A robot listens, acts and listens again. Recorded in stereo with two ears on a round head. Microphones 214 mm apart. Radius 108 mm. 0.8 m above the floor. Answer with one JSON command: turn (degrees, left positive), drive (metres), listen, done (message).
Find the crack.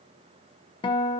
{"listen": true}
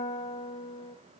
{"listen": true}
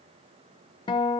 {"done": "I can't make out a crack, only a guitar."}